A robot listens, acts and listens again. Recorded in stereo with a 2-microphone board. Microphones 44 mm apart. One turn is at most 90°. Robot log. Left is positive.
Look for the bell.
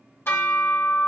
note: The bell: about 70° left or 110° left.
cmd yaw +70
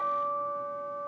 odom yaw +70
note: So it is at 10° left.
cmd yaw +10
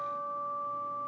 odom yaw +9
end: Facing the bell, 1 to 2 m away.